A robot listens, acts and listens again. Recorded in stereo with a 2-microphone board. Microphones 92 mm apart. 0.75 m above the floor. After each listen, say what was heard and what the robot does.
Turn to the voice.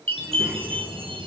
The child speaking: about 15° right or 165° right. Turn 15° right.
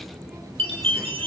Turn 30° right.
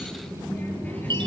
So it is at 20° left. Turn 20° left.
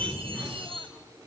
Facing the child speaking.